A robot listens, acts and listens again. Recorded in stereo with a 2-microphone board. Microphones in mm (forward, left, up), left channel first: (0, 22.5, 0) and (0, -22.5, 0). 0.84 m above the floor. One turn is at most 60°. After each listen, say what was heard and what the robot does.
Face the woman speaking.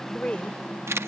The woman speaking: about 25° left or 155° left. Turn 25° left.
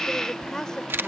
The woman speaking: about 15° left or 165° left. Turn 15° left.
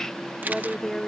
Turn 30° left.
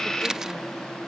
Keep listening.
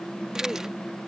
Keep listening.
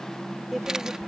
Found it: a woman speaking, straight ahead.